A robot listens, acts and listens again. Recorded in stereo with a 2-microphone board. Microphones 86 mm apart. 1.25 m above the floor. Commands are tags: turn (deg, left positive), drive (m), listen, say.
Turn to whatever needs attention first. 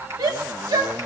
<turn deg="-45"/>
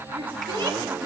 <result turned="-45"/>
<turn deg="-90"/>
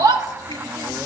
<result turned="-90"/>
<turn deg="-45"/>
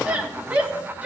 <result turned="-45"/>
<turn deg="-15"/>
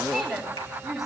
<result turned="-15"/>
<say>Facing the shout.</say>